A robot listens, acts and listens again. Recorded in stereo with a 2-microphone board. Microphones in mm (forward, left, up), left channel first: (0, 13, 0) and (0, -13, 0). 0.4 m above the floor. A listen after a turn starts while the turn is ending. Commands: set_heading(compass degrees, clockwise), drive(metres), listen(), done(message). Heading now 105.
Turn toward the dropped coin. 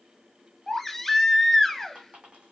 set_heading(150)
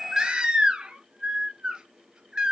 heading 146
listen()
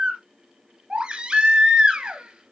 done("I heard a dropped coin, but can't make it out now. It was about 5° right or 90° right.")